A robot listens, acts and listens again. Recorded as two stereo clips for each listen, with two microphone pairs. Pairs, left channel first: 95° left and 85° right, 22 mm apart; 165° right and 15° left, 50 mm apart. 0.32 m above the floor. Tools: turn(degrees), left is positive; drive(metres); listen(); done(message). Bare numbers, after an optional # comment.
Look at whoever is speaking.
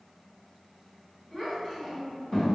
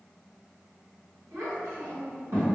# The child speaking: 30° left.
turn(30)
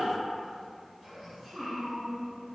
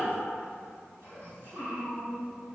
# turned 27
done("Facing the child speaking, 1 to 2 m away.")